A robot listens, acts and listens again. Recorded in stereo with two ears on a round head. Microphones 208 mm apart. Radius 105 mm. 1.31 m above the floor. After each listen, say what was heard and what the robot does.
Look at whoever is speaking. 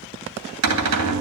Keep listening.
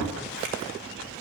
Keep listening.
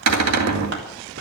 I can't make out anyone speaking to turn to.